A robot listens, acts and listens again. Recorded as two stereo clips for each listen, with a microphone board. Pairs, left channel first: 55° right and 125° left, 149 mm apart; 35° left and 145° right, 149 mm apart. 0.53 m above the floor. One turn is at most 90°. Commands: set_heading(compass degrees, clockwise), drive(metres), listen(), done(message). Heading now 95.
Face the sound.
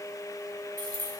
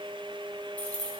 set_heading(5)
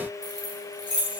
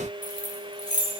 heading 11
set_heading(306)
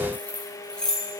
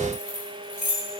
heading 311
set_heading(281)
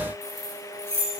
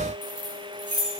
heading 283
set_heading(268)
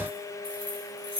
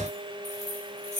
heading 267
done("Found it: keys jangling, straight ahead.")